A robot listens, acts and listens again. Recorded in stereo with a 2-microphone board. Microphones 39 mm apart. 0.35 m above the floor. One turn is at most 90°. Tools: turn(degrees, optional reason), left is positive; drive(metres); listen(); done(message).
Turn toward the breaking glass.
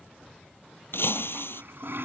turn(degrees=70, reason="The breaking glass: about 70° left or 110° left.")
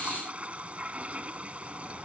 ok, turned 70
listen()
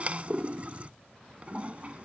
done("I heard breaking glass, but can't make it out now. It was about straight ahead or 40° left.")